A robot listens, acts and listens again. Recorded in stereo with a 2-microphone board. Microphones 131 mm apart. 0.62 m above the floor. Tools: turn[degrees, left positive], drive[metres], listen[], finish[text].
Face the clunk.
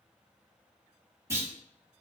Thought: The clunk: about 20° right or 160° right.
Action: turn[-20]
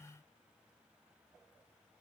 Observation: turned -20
Action: listen[]
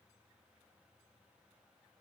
Action: finish[I heard a clunk, but can't make it out now. It was about straight ahead or 140° right.]